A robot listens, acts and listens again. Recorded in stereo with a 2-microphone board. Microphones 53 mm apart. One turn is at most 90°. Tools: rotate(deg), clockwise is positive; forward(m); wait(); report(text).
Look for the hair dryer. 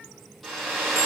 rotate(-30)
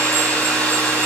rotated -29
rotate(-90)
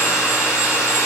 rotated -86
rotate(-65)
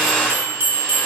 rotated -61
report("Facing the hair dryer, 2 to 4 m away.")